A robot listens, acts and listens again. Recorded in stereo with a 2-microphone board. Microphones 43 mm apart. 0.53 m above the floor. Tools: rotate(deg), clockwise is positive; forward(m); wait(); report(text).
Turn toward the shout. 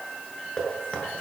wait()
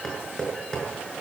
wait()
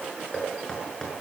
report("I can't make out a shout, only knocking.")